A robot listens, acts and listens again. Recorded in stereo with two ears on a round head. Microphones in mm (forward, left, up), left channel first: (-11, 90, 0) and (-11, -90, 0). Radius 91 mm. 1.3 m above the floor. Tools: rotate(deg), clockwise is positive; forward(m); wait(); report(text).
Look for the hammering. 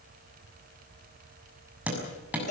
rotate(30)
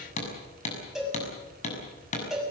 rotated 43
rotate(-35)
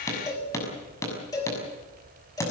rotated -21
rotate(-15)
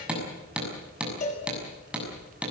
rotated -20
report("Facing the hammering.")